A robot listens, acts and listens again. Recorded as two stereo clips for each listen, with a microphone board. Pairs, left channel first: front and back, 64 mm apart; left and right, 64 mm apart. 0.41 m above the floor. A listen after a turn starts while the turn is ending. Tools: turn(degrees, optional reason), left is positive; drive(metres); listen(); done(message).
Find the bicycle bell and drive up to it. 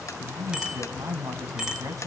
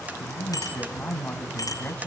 turn(degrees=100, reason="The bicycle bell: 100° left.")
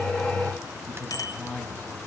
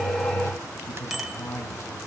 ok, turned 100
drive(metres=1.0)
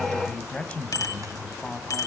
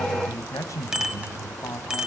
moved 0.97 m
turn(degrees=-10, reason="The bicycle bell is now 10° right.")
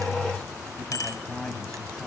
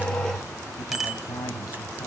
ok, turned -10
drive(metres=1.0)
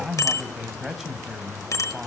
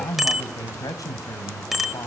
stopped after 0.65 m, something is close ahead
done("Arrived at the bicycle bell, straight ahead.")